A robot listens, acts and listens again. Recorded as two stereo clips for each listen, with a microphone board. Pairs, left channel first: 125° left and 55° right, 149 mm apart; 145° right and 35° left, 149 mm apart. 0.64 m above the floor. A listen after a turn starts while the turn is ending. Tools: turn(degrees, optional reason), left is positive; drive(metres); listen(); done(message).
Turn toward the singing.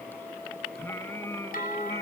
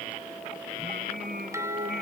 turn(degrees=50, reason="The singing: 50° left.")
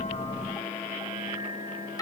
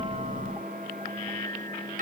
turn(degrees=10, reason="The singing is now 10° left.")
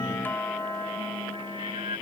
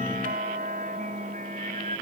done("Facing the singing.")